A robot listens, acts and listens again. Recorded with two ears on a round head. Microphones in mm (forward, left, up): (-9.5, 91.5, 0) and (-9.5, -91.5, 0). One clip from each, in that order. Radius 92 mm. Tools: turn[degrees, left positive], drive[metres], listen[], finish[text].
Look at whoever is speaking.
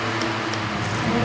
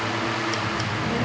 Thought: The child speaking: about 45° right or 135° right.
Action: turn[-45]
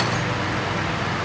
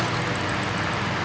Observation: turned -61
Thought: So it is at 20° left.
Action: turn[20]
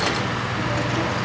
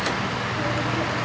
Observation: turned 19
Action: finish[Facing the child speaking, over 4 m away.]